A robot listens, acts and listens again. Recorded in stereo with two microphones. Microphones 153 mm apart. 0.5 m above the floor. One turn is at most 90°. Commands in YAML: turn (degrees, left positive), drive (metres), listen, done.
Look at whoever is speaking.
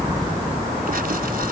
listen: true
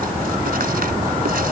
listen: true
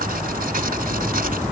done: "I can't make out anyone speaking to turn to."